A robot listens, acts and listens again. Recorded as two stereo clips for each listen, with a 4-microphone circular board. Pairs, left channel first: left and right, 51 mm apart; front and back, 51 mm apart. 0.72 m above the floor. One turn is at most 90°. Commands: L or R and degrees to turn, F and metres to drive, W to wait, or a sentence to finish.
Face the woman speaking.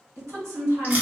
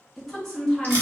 R80
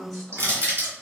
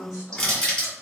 Facing the woman speaking.